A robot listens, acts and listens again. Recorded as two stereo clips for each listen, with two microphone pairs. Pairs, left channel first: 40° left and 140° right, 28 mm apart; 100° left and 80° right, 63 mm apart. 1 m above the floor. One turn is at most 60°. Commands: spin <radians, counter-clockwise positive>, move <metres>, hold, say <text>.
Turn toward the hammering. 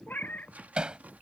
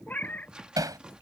spin -1.05
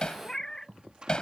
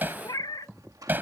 spin -0.35
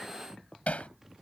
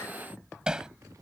say Facing the hammering.